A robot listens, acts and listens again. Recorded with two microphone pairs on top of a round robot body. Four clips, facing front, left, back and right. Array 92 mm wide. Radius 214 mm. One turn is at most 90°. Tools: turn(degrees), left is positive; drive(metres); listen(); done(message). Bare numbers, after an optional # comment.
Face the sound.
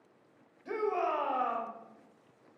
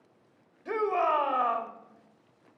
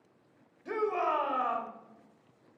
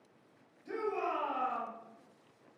# The shout: 110° left.
turn(90)
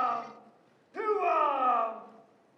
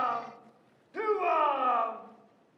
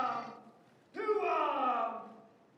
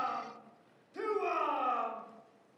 # The shout is now 55° left.
turn(55)
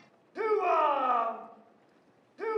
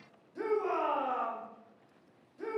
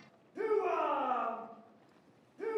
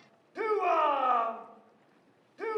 # The shout is now 25° right.
turn(-25)
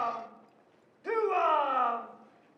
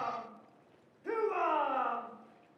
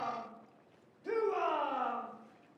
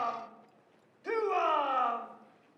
done("Found it: a shout, straight ahead, 1 to 2 m away.")